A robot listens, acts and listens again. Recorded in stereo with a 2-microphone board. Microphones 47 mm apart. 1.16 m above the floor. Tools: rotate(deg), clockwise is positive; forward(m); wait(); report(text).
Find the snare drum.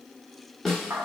rotate(-30)
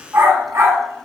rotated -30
rotate(-135)
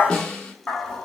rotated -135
rotate(-20)
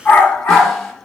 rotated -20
wait()
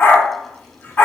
wait()
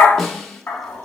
report("Found it: a snare drum, straight ahead, 1 to 2 m away.")